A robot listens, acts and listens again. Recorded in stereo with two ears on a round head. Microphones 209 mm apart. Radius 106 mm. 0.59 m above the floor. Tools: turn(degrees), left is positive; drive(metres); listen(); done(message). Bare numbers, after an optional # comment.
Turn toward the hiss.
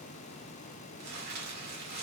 listen()
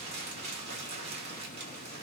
listen()
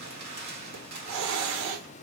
turn(-90)
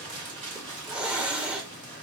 done("Found it: a hiss, straight ahead, under 1 m away.")